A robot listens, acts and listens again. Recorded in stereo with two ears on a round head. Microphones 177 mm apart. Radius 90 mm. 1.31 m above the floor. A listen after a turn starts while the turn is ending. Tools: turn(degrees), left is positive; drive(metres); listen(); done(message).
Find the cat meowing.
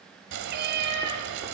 turn(degrees=-55)
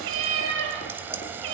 turn(degrees=-65)
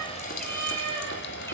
turn(degrees=10)
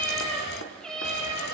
done("Found it: a cat meowing, straight ahead.")